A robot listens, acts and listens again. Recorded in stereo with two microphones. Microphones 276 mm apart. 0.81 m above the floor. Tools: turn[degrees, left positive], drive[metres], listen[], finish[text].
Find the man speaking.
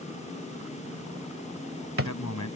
Action: turn[90]
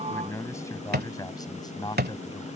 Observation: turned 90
Thought: So it is at 15° left.
Action: turn[15]
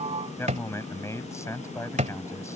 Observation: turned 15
Thought: The man speaking is now 10° left.
Action: turn[10]
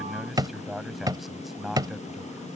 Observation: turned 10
Action: finish[Found it: a man speaking, straight ahead.]